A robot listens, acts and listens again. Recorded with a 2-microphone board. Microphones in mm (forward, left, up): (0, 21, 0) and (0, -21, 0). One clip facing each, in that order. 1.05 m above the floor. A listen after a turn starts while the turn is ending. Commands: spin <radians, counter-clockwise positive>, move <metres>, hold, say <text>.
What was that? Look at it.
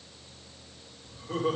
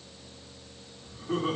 spin -0.79
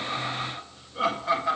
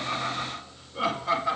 say Found it: laughter, straight ahead.